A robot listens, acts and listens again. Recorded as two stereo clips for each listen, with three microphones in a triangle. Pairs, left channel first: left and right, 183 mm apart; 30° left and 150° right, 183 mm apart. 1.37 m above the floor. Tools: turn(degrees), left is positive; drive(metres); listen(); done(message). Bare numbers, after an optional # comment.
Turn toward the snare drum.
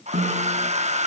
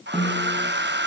# The snare drum: 60° right.
turn(-60)
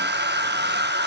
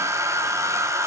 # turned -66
listen()
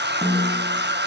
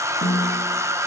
done("Found it: a snare drum, straight ahead, over 4 m away.")